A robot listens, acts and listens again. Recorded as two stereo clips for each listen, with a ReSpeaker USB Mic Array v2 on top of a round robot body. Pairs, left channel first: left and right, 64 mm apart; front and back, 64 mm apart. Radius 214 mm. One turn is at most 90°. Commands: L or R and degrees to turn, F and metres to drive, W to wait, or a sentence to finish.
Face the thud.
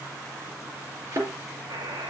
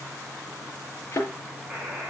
R55
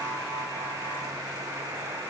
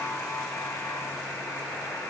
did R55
Facing where the thud came from. I can't hear it now.